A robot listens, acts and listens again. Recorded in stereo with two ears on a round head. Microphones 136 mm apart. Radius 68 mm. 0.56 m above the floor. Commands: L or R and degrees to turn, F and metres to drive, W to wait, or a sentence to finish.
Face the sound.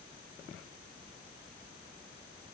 W
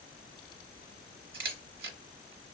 R70
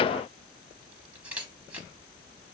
R10
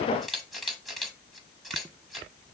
Found it: a camera shutter, straight ahead, under 1 m away.